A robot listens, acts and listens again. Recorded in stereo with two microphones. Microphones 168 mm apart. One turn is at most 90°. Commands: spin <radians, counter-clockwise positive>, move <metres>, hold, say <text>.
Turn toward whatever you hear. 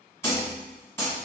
spin 0.52
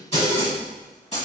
spin 1.57
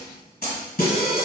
spin 1.22
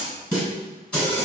say Facing the snare drum, 1 to 2 m away.